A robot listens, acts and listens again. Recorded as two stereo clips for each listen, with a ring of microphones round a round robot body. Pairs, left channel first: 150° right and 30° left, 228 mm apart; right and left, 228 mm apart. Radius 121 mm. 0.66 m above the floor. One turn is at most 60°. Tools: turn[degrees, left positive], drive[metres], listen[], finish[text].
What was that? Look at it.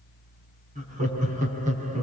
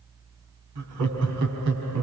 Thought: The laughter: 90° left.
Action: turn[60]
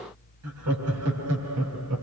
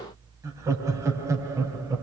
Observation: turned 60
Thought: The laughter is now 15° left.
Action: turn[15]
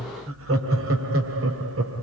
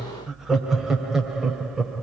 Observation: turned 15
Action: finish[Facing the laughter, 2 to 4 m away.]